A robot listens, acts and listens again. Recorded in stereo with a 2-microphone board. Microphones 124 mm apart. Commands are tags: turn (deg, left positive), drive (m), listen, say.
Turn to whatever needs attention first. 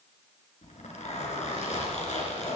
<listen/>
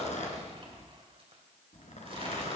<listen/>
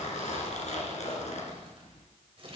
<say>I can't make out anything urgent to turn to.</say>